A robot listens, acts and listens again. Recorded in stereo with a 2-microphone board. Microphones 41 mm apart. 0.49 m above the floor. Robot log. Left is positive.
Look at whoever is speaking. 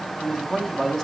cmd yaw +30
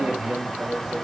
note: So it is at 15° right.
cmd yaw -15
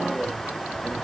cmd idle
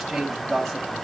end: Found it: a man speaking, straight ahead, 2 to 4 m away.